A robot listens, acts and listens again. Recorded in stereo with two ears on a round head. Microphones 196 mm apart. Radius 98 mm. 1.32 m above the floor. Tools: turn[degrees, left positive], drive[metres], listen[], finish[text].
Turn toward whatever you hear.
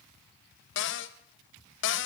Thought: The cupboard door: about 60° left or 120° left.
Action: turn[60]
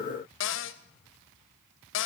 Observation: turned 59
Thought: So it is at 60° left.
Action: turn[60]
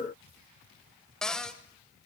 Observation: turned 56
Action: finish[Facing the cupboard door.]